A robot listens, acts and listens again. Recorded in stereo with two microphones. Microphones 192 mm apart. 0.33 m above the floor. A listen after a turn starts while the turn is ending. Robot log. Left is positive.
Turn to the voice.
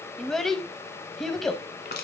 cmd yaw +30
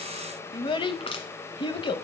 note: So it is at 150° left.
cmd yaw +150
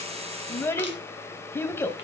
note: The child speaking is now 15° left.
cmd yaw +15
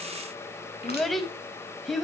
end: Facing the child speaking.